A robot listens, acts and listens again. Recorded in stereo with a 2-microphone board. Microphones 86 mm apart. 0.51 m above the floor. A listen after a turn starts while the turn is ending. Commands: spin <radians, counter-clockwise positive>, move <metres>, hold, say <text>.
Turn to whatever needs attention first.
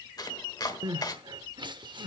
spin -1.05
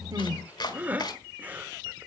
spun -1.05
spin -0.44
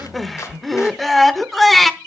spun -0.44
say Found it: crying, straight ahead, under 1 m away.